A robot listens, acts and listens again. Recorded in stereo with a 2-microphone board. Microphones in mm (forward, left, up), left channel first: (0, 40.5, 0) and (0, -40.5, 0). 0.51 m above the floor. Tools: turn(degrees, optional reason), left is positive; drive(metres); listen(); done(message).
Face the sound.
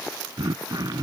turn(degrees=-55, reason="The throat clearing: about 55° right or 125° right.")
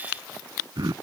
turn(degrees=-65, reason="So it is at 65° right.")
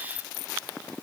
listen()
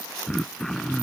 done("Found it: throat clearing, straight ahead.")